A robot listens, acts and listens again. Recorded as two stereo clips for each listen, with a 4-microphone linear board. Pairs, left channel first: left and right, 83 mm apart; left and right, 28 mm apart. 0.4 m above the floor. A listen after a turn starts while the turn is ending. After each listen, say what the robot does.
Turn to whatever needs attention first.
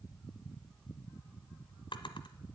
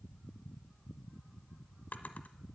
Keep listening.
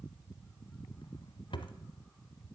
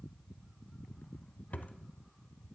Keep listening.
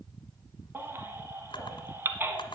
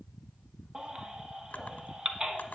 Turn 25° right.
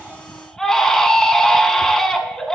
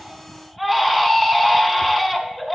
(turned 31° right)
Found it: a baby crying, straight ahead, 1 to 2 m away.